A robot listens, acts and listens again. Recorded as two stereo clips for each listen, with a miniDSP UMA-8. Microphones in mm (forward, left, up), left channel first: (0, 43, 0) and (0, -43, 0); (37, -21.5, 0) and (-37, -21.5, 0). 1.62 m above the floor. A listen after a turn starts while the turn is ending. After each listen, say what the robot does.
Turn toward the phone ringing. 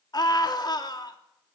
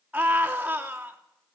Keep listening.
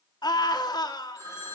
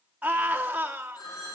Turn 35° left.
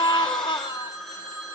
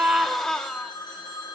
Found it: a phone ringing, straight ahead.